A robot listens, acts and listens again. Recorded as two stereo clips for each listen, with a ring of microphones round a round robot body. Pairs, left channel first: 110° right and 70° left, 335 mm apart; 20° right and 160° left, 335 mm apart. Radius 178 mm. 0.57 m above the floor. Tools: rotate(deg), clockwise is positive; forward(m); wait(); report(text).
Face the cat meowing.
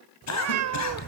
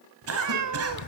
rotate(-115)
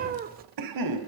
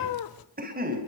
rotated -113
report("Found it: a cat meowing, straight ahead.")